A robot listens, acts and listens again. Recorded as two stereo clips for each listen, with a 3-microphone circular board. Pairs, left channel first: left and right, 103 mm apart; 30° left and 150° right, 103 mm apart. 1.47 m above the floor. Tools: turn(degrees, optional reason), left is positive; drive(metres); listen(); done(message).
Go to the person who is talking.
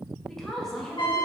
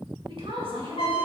turn(degrees=175, reason="The woman speaking: 175° left.")
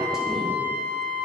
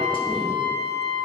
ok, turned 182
listen()
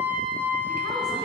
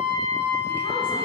listen()
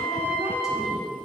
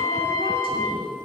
done("Facing where the woman speaking came from. I can't hear it now. I did not reach it.")